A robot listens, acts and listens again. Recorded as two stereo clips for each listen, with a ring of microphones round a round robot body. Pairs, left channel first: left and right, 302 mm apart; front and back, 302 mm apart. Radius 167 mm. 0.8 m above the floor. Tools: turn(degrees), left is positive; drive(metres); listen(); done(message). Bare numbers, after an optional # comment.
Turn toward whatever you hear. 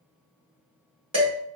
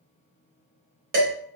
# The dishes clattering: 165° right.
turn(-165)
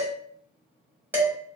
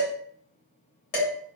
done("Facing the dishes clattering, 1 to 2 m away.")